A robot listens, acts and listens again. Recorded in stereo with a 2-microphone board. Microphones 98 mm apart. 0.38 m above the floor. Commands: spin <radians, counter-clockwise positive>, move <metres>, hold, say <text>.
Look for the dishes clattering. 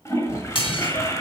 spin 1.05
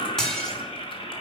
say Facing the dishes clattering, 2 to 4 m away.